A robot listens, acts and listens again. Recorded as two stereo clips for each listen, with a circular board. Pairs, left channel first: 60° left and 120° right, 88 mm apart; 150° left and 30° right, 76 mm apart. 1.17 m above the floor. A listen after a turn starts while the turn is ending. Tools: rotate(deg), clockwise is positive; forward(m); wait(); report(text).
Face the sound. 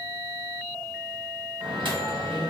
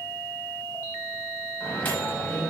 rotate(145)
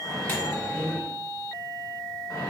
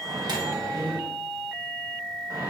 rotate(-15)
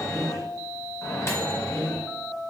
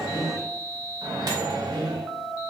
report("Facing the microwave, under 1 m away.")